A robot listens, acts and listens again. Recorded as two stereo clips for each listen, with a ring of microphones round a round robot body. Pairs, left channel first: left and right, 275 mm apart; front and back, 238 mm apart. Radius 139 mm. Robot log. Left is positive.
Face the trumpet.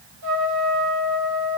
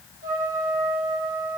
note: The trumpet: 115° right.
cmd yaw -115
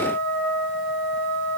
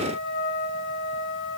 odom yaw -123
end: Found it: a trumpet, straight ahead.